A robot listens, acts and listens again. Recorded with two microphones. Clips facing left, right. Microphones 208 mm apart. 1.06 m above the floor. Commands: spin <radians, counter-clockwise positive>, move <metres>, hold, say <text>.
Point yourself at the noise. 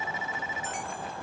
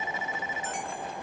hold
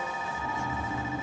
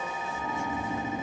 spin -0.52
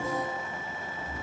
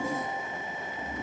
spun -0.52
spin -2.01
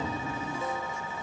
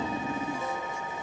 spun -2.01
spin -0.52
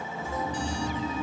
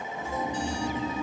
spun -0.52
spin -0.26
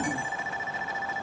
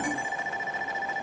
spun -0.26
say Found it: snoring, straight ahead, under 1 m away.